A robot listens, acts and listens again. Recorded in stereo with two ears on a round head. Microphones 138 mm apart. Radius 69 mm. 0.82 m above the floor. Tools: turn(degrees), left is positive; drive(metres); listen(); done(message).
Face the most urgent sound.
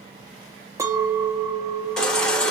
turn(degrees=30)
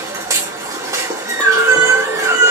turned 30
turn(degrees=-20)
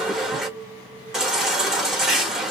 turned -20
done("Found it: a baby crying, straight ahead.")